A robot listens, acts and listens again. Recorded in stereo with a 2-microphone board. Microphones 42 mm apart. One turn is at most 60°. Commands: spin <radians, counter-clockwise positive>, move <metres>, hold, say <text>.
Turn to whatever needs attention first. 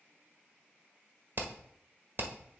hold
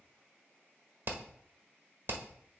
hold
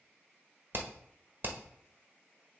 say I can't make out anything urgent, only hammering.